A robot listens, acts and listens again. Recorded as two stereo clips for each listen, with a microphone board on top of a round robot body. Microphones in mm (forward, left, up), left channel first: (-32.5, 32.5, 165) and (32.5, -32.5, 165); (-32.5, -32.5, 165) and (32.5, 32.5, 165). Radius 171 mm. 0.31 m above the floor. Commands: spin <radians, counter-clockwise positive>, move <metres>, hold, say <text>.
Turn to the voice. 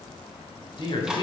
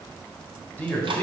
spin 2.62
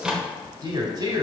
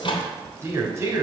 spin -0.17
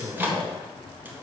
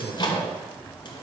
say Facing the man speaking.